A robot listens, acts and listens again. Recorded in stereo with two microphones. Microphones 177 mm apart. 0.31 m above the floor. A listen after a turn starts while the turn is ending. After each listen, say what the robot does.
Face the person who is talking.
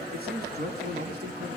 Turn 65° right.
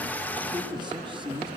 Turn 30° right.
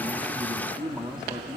Turn 10° right.
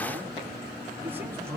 Turn 15° right.
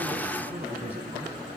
Turn 10° right.
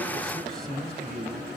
Facing the man speaking.